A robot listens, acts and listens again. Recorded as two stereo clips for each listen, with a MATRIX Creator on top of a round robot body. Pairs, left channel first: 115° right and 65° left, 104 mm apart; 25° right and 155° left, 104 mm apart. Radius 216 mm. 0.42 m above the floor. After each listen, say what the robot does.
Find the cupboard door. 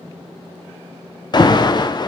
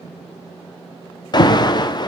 Keep listening.
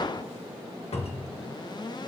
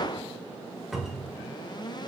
Turn 115° right.
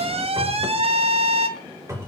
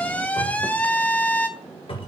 Facing the cupboard door.